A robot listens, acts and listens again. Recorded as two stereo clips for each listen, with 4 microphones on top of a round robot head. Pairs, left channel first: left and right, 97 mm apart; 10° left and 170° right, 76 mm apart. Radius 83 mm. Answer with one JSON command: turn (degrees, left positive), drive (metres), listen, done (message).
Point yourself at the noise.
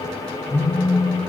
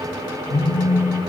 {"turn": 25}
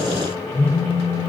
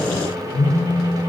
{"turn": 25}
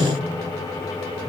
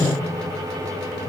{"turn": 15}
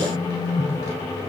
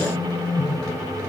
{"done": "Facing the phone buzzing, 2 to 4 m away."}